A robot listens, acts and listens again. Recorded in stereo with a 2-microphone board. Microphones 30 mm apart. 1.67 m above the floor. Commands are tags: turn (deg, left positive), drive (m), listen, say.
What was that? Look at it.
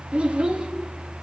<turn deg="-35"/>
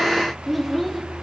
<say>Facing the child speaking, 2 to 4 m away.</say>